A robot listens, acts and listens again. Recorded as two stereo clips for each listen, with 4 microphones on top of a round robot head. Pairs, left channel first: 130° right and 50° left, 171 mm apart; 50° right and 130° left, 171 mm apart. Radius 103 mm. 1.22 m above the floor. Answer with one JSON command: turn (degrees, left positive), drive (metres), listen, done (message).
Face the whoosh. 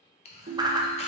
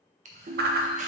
{"turn": 115}
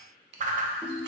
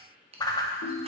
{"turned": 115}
{"turn": 15}
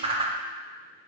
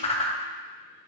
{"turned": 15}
{"done": "Facing the whoosh, under 1 m away."}